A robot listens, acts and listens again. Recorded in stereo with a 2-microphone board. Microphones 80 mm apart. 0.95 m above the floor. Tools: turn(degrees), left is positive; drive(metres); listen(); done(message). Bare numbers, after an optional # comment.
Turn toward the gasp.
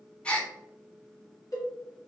turn(30)
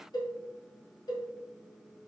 listen()
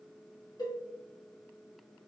done("I heard a gasp, but can't make it out now. It was about 15° right or 135° left.")